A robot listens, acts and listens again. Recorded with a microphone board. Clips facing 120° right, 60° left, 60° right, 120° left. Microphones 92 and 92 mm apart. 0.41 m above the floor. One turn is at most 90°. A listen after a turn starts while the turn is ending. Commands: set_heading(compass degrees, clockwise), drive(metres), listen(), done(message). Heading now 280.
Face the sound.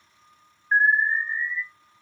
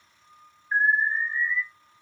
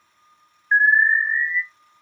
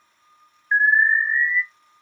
set_heading(10)
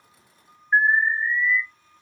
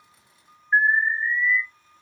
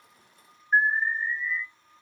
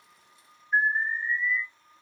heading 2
set_heading(52)
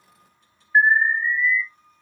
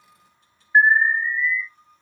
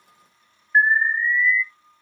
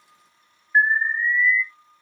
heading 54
done("Found it: an alarm, straight ahead, 1 to 2 m away.")